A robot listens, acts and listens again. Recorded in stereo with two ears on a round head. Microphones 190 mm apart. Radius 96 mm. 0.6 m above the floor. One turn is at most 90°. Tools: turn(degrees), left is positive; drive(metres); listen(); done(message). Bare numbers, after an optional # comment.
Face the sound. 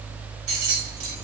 # The keys jangling: about 70° right or 110° right.
turn(-70)
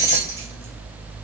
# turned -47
# So it is at 15° right.
turn(-15)
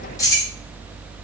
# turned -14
# The keys jangling is now 20° left.
turn(20)
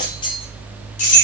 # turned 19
# The keys jangling is now 35° left.
turn(35)
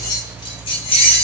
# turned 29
# The keys jangling is now 30° left.
turn(30)
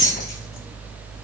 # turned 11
# The keys jangling is now 15° left.
turn(15)
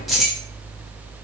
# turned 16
done("Found it: keys jangling, straight ahead.")